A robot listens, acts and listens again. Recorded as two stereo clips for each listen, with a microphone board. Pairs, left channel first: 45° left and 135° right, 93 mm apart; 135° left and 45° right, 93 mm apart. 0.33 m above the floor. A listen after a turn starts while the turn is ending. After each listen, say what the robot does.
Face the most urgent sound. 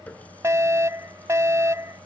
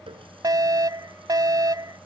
Turn 85° right.
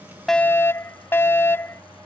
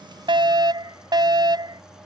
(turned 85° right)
Turn 15° right.
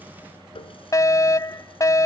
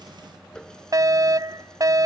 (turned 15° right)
Found it: a fire alarm, straight ahead.